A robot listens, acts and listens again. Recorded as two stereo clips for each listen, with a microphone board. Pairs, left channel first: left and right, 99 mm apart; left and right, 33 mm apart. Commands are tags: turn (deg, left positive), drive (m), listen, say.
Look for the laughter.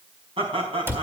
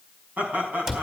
<turn deg="-70"/>
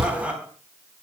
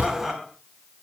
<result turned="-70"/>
<turn deg="-10"/>
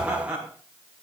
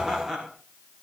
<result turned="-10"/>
<turn deg="-10"/>
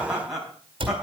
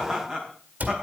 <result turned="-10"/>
<turn deg="-10"/>
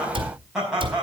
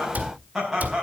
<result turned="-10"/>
<turn deg="-10"/>
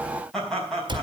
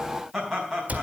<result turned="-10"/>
<say>Found it: laughter, straight ahead.</say>